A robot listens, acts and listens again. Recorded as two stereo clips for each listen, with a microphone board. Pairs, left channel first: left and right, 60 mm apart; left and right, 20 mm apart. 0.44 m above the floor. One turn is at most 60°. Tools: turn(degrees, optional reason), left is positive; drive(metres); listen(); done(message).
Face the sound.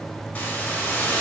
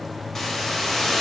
turn(degrees=30, reason="The hiss: about 30° left or 150° left.")
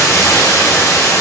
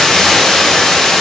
turn(degrees=60, reason="So it is at 120° left.")
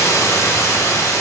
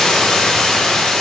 turn(degrees=60, reason="The hiss is now 65° left.")
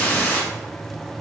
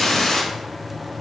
turn(degrees=30, reason="The hiss is now 30° left.")
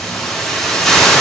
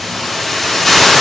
turn(degrees=10, reason="The hiss is now 10° left.")
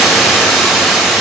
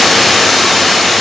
done("Facing the hiss.")